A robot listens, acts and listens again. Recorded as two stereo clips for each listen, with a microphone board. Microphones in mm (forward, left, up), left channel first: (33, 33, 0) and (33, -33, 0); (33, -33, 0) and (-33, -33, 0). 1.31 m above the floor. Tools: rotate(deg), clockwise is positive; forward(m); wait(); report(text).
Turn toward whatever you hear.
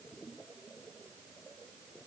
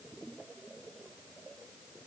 wait()
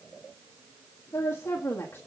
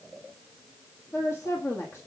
rotate(-35)
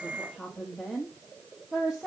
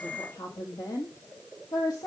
rotate(15)
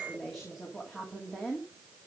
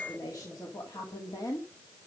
report("Facing the woman speaking, 2 to 4 m away.")